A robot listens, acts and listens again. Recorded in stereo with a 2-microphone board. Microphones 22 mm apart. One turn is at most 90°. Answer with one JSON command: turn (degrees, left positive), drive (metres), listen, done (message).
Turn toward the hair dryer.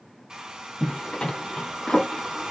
{"turn": -40}
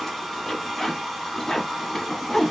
{"done": "Found it: a hair dryer, straight ahead, 1 to 2 m away."}